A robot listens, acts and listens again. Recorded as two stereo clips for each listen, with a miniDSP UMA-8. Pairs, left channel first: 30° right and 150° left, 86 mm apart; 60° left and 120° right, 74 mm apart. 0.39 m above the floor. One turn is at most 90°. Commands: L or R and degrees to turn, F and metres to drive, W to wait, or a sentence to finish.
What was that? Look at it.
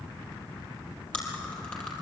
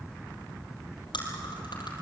L50
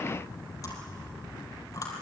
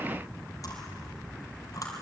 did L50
L20
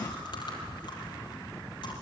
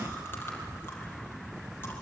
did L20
Found it: chewing, straight ahead.